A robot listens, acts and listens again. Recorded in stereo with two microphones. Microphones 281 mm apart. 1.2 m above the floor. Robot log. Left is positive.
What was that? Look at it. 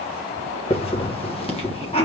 note: The hiss: about 20° left or 160° left.
cmd yaw +20
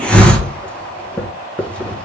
end: Found it: a hiss, straight ahead.